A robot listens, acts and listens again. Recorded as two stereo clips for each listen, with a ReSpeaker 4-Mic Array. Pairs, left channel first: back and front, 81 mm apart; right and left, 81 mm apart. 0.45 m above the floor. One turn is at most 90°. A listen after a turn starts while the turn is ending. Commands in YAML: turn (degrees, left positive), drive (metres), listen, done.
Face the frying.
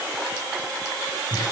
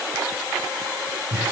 listen: true
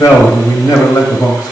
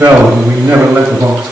listen: true
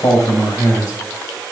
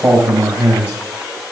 done: "I can't make out frying to turn to."